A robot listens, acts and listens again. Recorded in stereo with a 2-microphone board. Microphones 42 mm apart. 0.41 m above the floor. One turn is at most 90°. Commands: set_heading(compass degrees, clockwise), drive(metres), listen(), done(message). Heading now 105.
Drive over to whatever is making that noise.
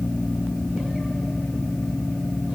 listen()
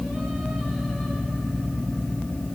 listen()
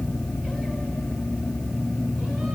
done("I can't make out anything.")